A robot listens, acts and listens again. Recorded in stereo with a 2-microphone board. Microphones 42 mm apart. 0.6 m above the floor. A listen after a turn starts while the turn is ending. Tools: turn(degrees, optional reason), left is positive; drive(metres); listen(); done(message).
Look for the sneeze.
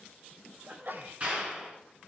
turn(degrees=-55, reason="The sneeze: about 55° right or 125° right.")
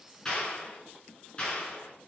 listen()
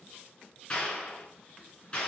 done("I heard a sneeze, but can't make it out now. It was about straight ahead or 70° right.")